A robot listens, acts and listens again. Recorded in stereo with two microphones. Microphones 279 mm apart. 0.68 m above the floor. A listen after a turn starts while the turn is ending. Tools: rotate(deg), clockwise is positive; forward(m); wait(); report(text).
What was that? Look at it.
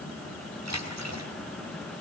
rotate(70)
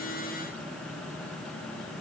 wait()
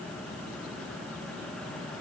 report("I heard a splash, but can't make it out now. It was about straight ahead or 40° right.")